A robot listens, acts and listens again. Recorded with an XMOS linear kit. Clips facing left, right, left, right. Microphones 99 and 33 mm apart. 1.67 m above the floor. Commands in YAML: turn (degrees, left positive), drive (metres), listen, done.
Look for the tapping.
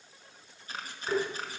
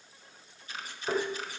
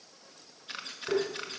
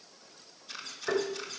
turn: -40
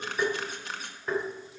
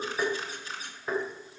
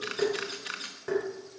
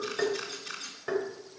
done: "Found it: tapping, straight ahead."